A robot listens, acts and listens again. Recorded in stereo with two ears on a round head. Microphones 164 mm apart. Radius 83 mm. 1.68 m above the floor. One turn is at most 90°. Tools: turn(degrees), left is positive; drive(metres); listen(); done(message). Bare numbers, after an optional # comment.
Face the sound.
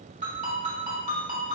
# The ringtone: about 40° right or 140° right.
turn(-40)
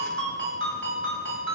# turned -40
# So it is at 100° right.
turn(-90)
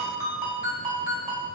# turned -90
# The ringtone is now 15° right.
turn(-15)
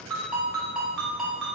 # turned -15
done("Found it: a ringtone, straight ahead, 1 to 2 m away.")